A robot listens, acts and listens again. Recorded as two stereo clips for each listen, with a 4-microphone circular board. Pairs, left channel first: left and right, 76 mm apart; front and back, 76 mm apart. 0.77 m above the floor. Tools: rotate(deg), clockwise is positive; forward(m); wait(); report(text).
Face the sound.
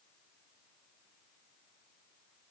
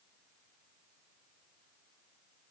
wait()
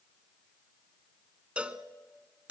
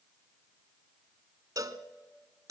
rotate(160)
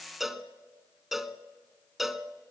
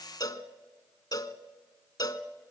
report("Facing the cowbell, 1 to 2 m away.")